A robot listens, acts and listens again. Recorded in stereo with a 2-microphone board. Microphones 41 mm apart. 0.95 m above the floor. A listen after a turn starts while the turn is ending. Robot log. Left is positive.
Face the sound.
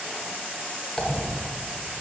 note: The dropped coin: about 15° left or 165° left.
cmd yaw +15
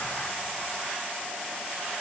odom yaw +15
cmd idle
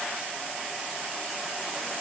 end: I heard a dropped coin, but can't make it out now. It was about straight ahead or 150° left.